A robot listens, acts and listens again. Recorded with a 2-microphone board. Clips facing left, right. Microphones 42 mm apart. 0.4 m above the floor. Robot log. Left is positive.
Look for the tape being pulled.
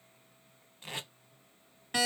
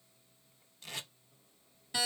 note: The tape being pulled: about 25° left or 155° left.
cmd yaw +25
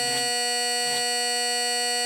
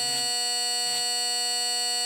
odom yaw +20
cmd idle
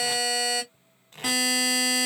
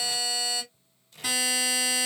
note: So it is at 130° left.
cmd yaw +130
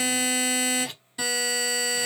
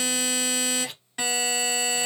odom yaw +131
end: Facing the tape being pulled, under 1 m away.